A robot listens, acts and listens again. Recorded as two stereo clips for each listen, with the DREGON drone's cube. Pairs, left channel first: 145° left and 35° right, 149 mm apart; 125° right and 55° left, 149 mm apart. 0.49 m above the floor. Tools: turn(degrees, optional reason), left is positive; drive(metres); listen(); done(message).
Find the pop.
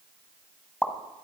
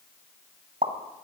turn(degrees=65, reason="The pop: 65° left.")
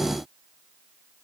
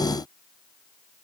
done("Facing where the pop came from. I can't hear it now.")